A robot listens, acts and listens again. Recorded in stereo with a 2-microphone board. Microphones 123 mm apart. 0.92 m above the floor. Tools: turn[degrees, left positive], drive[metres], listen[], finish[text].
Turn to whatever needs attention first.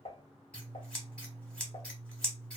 Action: listen[]
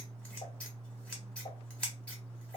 Action: listen[]
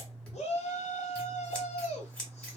Thought: The shout: about 60° left or 120° left.
Action: turn[60]
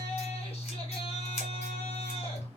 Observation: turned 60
Action: listen[]
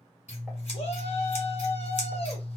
Action: listen[]
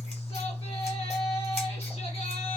Action: finish[I heard a shout, but can't make it out now. It was about straight ahead or 60° left.]